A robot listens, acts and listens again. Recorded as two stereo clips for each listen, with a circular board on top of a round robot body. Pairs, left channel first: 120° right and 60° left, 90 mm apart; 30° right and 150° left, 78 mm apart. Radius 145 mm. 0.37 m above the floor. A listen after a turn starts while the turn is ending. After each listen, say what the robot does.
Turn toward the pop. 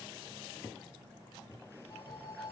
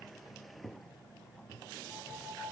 Keep listening.
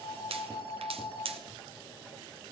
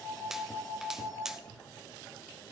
Turn 65° left.
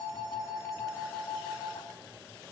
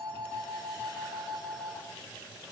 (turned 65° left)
Facing where the pop came from. I can't hear it now.